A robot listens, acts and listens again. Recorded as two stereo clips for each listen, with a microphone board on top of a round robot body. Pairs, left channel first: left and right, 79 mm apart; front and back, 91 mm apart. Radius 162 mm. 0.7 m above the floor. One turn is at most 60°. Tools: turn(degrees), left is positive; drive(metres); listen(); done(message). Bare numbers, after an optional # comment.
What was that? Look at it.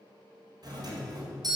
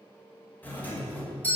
# The doorbell: 70° right.
turn(-60)
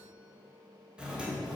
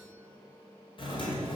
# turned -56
# The doorbell is now 15° right.
turn(-15)
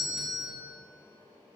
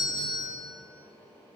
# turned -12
done("Facing the doorbell.")